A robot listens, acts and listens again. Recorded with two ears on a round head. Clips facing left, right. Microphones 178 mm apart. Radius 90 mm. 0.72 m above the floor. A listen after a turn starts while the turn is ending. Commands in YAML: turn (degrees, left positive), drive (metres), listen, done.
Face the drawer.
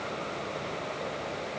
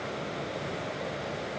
listen: true
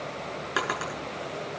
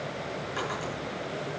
turn: 90
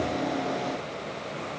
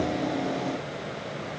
listen: true
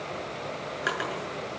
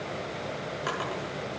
turn: 10
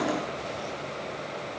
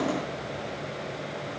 listen: true
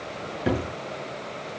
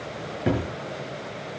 done: "Found it: a drawer, straight ahead, over 4 m away."